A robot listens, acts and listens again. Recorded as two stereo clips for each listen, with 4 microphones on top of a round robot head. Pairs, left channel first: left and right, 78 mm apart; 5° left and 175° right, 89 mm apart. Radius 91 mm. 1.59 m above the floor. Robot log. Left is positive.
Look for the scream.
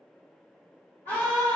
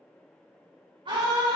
note: The scream: 160° left.
cmd yaw +160
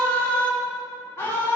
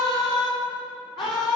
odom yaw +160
note: The scream is now 35° left.
cmd yaw +35
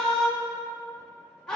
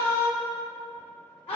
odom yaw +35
note: The scream is now 10° left.
cmd yaw +10
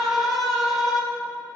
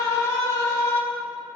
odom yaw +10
end: Facing the scream, 2 to 4 m away.